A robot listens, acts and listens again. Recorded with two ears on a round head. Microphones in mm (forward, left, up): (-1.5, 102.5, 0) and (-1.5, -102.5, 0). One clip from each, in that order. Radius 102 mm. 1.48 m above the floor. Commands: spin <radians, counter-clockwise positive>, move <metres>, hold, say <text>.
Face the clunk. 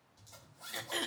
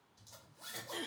hold
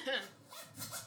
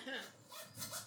hold
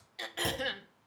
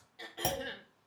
spin -0.44
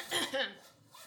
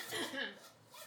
hold
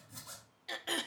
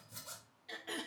say I heard a clunk, but can't make it out now. It was about straight ahead or 130° right.